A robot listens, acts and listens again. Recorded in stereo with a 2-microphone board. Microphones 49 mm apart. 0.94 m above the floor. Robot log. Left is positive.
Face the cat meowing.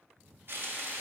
cmd idle
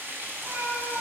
note: The cat meowing: about 55° right or 125° right.
cmd yaw -55
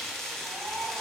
note: So it is at 65° right.
cmd yaw -65
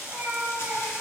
note: The cat meowing is now 50° right.
cmd yaw -50
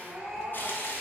note: The cat meowing is now 10° right.
cmd yaw -10
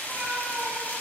end: Found it: a cat meowing, straight ahead, 1 to 2 m away.